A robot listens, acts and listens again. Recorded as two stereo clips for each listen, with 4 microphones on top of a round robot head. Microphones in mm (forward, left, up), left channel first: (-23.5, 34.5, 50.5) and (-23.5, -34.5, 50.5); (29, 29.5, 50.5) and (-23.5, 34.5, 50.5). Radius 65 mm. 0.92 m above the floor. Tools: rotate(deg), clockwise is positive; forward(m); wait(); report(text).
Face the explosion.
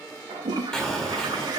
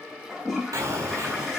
rotate(-170)
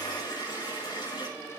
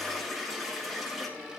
report("I heard an explosion from this way, but can't make it out now.")